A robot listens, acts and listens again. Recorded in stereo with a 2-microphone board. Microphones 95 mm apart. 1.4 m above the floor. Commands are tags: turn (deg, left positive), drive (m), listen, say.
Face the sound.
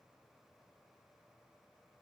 <listen/>
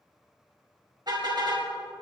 <turn deg="-50"/>
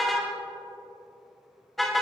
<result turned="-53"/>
<say>Facing the car horn.</say>